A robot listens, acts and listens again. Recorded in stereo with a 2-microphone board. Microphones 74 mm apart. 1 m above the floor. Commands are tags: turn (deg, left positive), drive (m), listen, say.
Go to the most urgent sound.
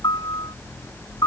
<listen/>
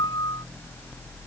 <listen/>
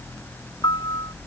<say>I can't make out anything urgent to turn to.</say>